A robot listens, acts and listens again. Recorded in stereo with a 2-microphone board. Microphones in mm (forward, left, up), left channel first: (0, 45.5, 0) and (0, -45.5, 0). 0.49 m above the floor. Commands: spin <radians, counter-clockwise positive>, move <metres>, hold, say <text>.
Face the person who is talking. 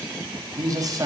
spin -0.70
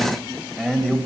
say Facing the man speaking.